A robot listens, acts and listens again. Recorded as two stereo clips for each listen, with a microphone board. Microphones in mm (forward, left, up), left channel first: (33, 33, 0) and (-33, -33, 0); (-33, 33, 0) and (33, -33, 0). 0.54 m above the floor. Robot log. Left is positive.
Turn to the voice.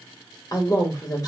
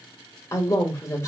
note: The man speaking: 85° left.
cmd yaw +85
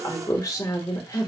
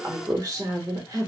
end: Found it: a man speaking, straight ahead, 1 to 2 m away.